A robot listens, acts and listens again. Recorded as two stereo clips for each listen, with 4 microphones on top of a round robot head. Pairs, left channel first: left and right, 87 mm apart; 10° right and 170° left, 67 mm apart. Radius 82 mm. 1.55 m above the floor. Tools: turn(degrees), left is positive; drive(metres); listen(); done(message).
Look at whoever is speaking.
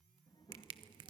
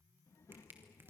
turn(degrees=35)
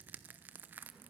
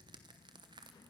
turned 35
listen()
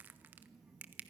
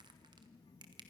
done("Facing the child speaking.")